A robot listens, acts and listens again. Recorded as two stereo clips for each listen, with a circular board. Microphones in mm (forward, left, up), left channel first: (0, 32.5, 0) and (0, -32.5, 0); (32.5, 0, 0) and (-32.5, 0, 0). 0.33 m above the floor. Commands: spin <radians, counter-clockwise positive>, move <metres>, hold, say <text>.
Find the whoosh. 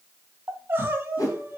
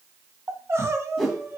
spin 1.57
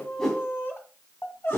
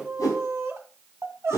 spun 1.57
spin 0.17
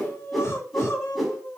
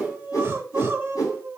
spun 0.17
say Found it: a whoosh, straight ahead.